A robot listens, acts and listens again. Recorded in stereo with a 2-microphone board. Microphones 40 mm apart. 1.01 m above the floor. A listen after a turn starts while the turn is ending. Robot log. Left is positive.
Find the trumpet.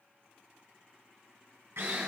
cmd idle
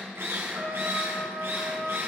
note: The trumpet: about 55° right or 125° right.
cmd yaw -55
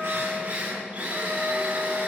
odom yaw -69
cmd idle
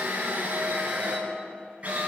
cmd idle
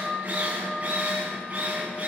note: So it is at 10° left.
cmd yaw +10
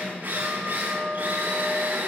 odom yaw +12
end: Facing the trumpet.